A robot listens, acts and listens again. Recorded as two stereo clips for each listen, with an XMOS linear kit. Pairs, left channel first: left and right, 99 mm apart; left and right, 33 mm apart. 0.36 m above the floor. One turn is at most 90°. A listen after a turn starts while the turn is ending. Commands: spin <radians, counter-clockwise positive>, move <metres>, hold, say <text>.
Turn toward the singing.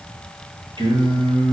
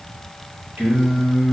spin -1.05
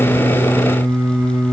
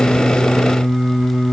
spin -0.35
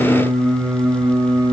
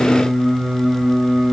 spin -0.44
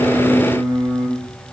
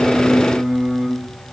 spin -0.17
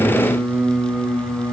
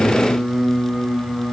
spin -0.35
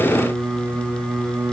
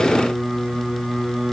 spin -0.17
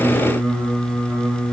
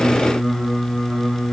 say Facing the singing, 1 to 2 m away.